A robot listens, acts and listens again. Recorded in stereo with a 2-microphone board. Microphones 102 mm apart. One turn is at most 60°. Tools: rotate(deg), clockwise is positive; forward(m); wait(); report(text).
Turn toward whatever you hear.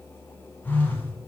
rotate(-20)
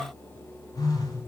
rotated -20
rotate(-60)
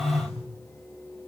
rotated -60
rotate(-60)
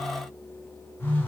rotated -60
rotate(-20)
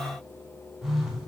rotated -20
report("Found it: a phone buzzing, straight ahead.")